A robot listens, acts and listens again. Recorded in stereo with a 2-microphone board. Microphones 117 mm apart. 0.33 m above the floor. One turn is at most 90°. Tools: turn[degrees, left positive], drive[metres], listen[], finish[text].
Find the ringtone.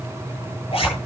Action: listen[]
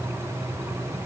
Action: listen[]
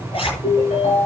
Action: turn[90]
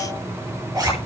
Action: listen[]
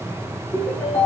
Thought: The ringtone is now 15° left.
Action: turn[15]
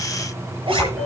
Action: finish[Found it: a ringtone, straight ahead, over 4 m away.]